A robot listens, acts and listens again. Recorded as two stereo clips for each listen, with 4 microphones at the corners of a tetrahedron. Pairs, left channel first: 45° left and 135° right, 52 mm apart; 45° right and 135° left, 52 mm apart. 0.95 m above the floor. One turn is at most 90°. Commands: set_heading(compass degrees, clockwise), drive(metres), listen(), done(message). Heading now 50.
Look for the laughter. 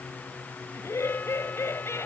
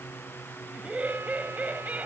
set_heading(335)
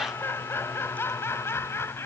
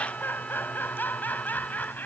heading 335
set_heading(325)
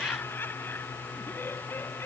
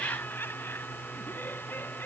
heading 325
done("Found it: laughter, straight ahead.")